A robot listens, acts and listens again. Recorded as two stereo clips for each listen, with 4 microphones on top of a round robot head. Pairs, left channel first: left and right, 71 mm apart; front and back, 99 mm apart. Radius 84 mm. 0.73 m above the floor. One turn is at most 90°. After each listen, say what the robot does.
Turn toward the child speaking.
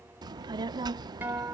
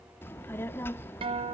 Turn 70° right.
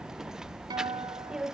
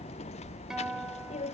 Turn 10° right.
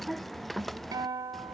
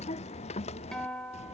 Found it: a child speaking, straight ahead.